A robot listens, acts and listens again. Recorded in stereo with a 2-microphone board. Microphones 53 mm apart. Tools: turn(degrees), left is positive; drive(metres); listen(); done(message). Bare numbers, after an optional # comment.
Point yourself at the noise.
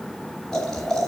turn(30)
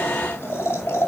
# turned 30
# So it is at 135° left.
turn(135)
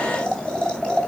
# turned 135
# The boiling is now 15° left.
turn(15)
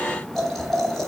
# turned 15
done("Found it: boiling, straight ahead, 2 to 4 m away.")